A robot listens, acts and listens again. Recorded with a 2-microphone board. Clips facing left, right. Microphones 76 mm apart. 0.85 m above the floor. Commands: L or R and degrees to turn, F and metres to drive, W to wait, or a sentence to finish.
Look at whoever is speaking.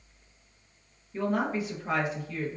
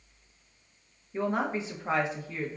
R25
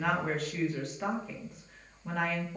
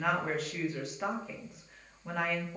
Found it: a woman speaking, straight ahead.